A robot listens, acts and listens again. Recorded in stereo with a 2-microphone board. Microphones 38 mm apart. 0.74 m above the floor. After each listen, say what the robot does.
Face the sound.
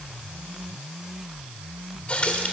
Turn 35° left.
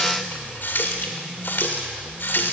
Turn 110° left.
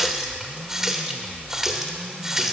Turn 10° right.
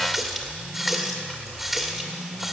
Facing the running tap, 1 to 2 m away.